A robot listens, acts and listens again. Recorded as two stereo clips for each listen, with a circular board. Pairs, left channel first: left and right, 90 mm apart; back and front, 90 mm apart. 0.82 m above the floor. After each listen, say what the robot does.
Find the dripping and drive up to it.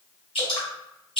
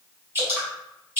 Turn 70° left.
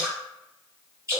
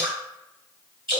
Turn 30° right.
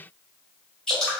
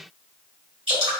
Drive 1.0 m forward.
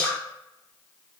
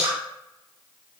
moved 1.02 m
Turn 15° left.
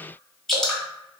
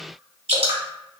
Drive 1.0 m forward.
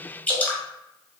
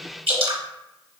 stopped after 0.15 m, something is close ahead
Turn 20° left.
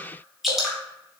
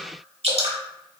Arrived at the dripping, straight ahead.